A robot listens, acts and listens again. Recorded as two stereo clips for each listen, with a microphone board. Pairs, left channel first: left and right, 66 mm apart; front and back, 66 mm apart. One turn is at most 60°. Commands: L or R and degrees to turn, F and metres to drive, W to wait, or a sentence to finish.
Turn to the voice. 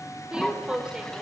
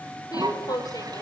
R10
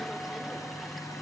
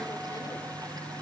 W
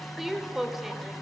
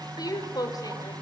Found it: a woman speaking, straight ahead.